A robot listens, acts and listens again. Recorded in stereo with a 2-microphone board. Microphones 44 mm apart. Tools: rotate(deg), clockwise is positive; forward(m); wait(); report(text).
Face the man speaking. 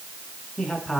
rotate(-30)
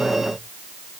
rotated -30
wait()
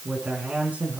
rotate(35)
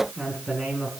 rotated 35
rotate(10)
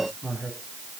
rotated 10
report("Facing the man speaking, over 4 m away.")